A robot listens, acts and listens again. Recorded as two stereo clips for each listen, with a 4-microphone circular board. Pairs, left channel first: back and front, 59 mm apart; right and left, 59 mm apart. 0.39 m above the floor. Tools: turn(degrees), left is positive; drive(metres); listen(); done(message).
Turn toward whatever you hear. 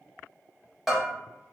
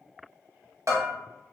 turn(degrees=85)
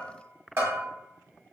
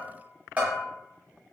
turn(degrees=30)
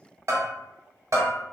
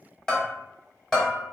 turn(degrees=-10)
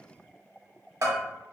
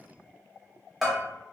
done("Facing the bell, under 1 m away.")